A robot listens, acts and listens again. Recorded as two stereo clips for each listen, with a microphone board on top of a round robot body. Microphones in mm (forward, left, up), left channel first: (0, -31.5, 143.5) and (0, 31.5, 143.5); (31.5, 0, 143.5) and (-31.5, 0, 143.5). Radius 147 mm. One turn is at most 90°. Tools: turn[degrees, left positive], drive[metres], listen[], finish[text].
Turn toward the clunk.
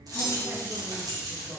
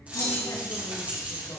Thought: The clunk: 25° right.
Action: turn[-25]
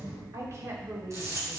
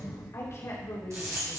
Action: finish[Facing where the clunk came from. I can't hear it now.]